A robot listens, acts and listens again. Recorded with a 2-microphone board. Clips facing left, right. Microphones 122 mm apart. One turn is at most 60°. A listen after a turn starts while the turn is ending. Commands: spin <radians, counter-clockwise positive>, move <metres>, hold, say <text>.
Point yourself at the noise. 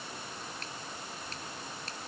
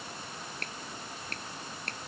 spin -1.05
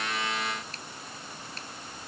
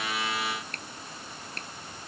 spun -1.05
spin -0.96
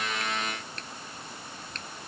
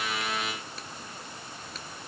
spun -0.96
say Facing the finger snap.